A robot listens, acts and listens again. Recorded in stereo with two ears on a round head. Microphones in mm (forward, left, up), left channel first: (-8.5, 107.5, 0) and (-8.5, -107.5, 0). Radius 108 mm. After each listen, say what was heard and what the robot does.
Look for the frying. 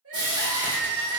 The frying: about 20° right or 160° right. Turn 20° right.
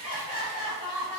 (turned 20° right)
Keep listening.
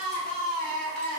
Keep listening.
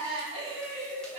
I heard frying, but can't make it out now. It was about straight ahead or 140° right.